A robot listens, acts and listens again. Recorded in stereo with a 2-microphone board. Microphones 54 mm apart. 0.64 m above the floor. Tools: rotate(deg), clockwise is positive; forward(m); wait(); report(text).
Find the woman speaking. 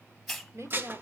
rotate(65)
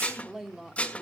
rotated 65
rotate(10)
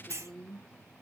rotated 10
rotate(-10)
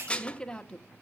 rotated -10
rotate(-15)
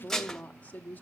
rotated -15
rotate(-30)
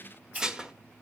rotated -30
wait()
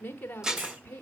rotate(-30)
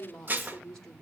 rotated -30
rotate(-10)
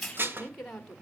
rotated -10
report("Found it: a woman speaking, straight ahead.")